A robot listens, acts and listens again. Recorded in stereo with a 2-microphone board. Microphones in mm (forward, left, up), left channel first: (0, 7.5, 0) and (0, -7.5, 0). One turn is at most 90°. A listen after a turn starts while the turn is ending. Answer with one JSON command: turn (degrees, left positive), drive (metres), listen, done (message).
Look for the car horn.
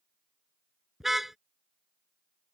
{"turn": -25}
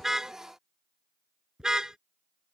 {"turn": -90}
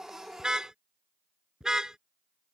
{"turn": -40}
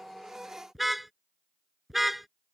{"done": "Facing the car horn."}